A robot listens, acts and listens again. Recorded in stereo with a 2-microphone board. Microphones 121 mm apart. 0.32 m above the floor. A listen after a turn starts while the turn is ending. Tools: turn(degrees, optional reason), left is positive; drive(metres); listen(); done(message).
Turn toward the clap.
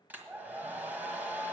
listen()
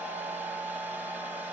listen()
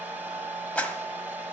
turn(degrees=30)
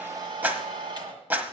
turn(degrees=-20, reason="So it is at 20° right.")
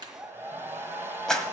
done("Found it: a clap, straight ahead.")